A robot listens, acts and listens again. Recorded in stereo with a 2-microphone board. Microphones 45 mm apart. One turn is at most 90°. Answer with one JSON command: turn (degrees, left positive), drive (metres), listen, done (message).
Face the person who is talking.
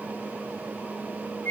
{"listen": true}
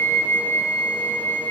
{"listen": true}
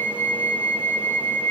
{"done": "I can't make out anyone speaking to turn to."}